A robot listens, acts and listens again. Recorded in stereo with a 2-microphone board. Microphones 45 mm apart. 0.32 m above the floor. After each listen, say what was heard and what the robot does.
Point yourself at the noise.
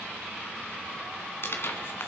The tearing paper: about 55° left or 125° left. Turn 55° left.
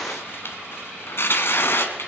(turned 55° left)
So it is at 65° left. Turn 65° left.
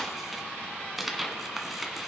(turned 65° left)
Found it: tearing paper, straight ahead, 1 to 2 m away.